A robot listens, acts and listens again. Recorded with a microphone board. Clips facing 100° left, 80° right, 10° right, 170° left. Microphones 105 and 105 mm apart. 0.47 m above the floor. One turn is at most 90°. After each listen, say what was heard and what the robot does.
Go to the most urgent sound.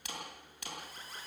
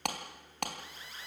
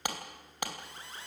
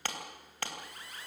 The alarm: 50° left. Turn 50° left.
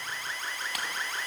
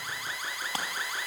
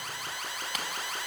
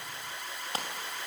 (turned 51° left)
Drive 1.0 m forward.
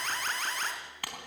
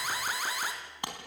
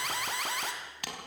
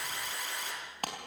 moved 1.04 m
Drive 1.0 m forward.
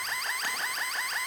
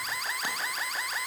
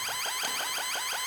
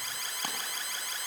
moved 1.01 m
The alarm is now 10° left. Turn 10° left.
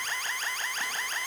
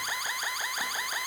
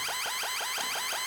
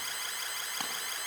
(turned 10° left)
Drive 1.0 m forward.
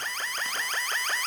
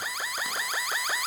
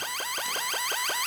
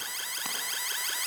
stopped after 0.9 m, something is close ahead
I am next to the alarm.